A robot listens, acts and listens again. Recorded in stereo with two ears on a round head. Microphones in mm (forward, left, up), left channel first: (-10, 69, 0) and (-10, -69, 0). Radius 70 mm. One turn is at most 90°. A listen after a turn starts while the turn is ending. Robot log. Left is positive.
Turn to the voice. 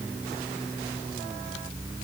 cmd idle
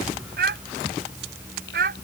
note: The child speaking: about 60° right or 120° right.
cmd yaw -60
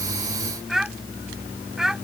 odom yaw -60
end: Facing the child speaking.